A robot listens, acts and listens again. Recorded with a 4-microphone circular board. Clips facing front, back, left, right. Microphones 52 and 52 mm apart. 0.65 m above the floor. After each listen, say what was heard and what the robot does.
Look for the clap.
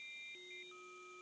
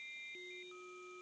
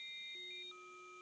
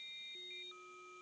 Keep listening.
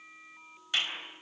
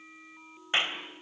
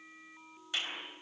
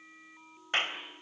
The clap: 125° right. Turn 125° right.
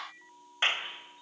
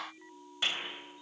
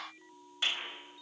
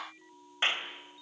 The clap is now 40° right. Turn 40° right.
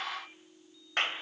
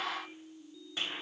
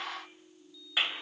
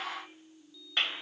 Found it: a clap, straight ahead.